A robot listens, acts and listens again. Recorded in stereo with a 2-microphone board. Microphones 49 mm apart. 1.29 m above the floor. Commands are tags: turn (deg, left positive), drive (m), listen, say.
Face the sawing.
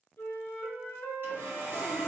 <turn deg="-50"/>
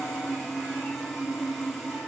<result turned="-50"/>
<say>Facing the sawing.</say>